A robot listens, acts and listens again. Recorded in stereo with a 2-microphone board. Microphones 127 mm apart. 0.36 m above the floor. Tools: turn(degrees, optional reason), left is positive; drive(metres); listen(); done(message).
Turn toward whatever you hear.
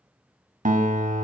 turn(degrees=-90)
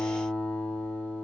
turn(degrees=10, reason="So it is at 10° left.")
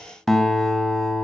done("Facing the guitar.")